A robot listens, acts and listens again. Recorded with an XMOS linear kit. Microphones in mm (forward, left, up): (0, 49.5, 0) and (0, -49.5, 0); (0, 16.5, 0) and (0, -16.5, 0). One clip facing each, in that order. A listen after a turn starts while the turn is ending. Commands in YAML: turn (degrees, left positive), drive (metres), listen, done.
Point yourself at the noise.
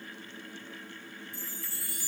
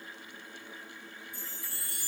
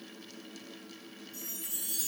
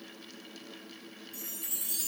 turn: -60
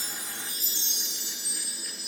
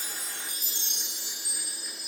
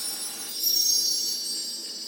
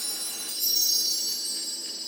turn: -60
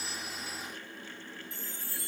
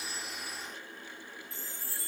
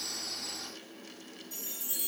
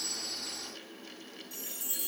done: "Found it: a chime, straight ahead, 1 to 2 m away."